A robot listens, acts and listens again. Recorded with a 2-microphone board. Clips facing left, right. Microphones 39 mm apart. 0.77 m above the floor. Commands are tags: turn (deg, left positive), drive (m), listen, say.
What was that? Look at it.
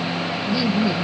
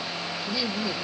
<turn deg="30"/>
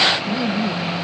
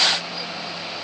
<turn deg="130"/>
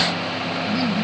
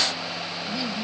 <say>Facing the laughter.</say>